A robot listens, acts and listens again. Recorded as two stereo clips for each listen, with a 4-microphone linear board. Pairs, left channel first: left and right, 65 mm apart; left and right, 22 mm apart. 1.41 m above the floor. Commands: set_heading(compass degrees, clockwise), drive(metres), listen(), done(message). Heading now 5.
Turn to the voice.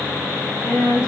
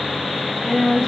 set_heading(320)
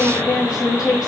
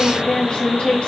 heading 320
set_heading(230)
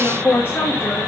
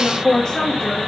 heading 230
set_heading(195)
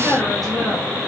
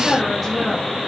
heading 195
done("Facing the woman speaking, 2 to 4 m away.")